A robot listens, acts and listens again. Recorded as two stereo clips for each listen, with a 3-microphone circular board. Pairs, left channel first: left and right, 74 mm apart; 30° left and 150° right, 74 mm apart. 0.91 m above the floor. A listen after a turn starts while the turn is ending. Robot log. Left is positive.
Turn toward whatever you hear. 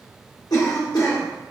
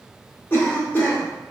note: The cough: 85° left.
cmd yaw +85
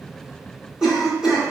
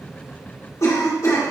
end: Found it: a cough, straight ahead, 1 to 2 m away.